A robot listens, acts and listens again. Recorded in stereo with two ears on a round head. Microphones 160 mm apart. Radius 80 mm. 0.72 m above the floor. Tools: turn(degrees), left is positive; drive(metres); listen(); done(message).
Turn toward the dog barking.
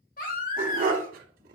turn(degrees=-50)
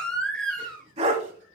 turn(degrees=-40)
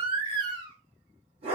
turn(degrees=-35)
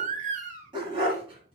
turn(degrees=-30)
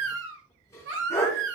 turn(degrees=20)
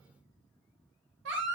listen()
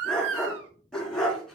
done("Found it: a dog barking, straight ahead.")